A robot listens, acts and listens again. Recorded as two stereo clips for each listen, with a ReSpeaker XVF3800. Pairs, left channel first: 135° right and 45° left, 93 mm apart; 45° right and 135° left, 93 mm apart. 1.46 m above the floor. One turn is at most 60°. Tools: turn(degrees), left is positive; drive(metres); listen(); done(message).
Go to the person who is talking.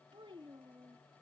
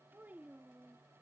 turn(degrees=60)
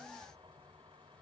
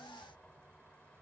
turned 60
listen()
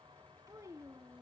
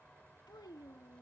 drive(metres=1.0)
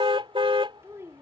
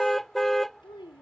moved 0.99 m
turn(degrees=-15)
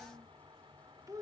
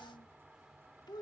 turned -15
drive(metres=1.0)
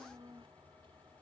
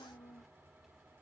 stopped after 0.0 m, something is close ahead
turn(degrees=-10)
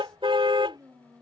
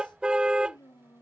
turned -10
done("I am next to the child speaking.")